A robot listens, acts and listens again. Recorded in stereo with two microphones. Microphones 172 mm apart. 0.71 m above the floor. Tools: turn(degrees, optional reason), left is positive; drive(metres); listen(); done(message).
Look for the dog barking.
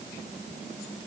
listen()
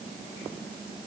listen()
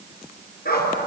turn(degrees=60, reason="The dog barking: about 60° left or 120° left.")
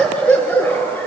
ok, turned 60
turn(degrees=10, reason="So it is at 10° left.")
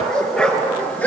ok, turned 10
turn(degrees=10, reason="The dog barking is now 10° left.")
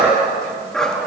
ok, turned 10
done("Found it: a dog barking, straight ahead, over 4 m away.")